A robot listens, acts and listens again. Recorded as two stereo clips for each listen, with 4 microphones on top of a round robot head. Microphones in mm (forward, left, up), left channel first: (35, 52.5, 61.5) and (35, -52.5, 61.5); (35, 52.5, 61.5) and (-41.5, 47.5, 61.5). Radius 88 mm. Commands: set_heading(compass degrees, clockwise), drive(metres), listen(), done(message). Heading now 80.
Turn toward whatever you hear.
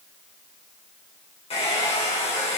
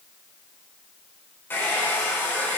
set_heading(15)
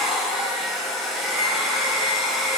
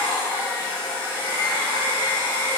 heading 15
done("Facing the hair dryer.")